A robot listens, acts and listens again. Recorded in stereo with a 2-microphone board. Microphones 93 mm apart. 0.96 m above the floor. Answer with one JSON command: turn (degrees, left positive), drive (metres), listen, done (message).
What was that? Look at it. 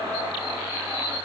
{"listen": true}
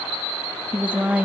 {"turn": -30}
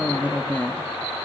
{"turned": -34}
{"turn": 20}
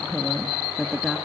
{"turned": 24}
{"done": "Found it: a woman speaking, straight ahead, 1 to 2 m away."}